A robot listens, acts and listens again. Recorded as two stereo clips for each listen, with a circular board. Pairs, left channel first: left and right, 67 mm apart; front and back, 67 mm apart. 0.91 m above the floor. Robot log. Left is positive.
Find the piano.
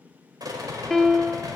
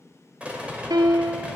note: The piano: 170° left.
cmd yaw +170
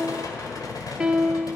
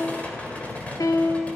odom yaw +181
note: The piano is now 10° right.
cmd yaw -10
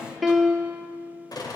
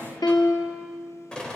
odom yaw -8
end: Facing the piano, 1 to 2 m away.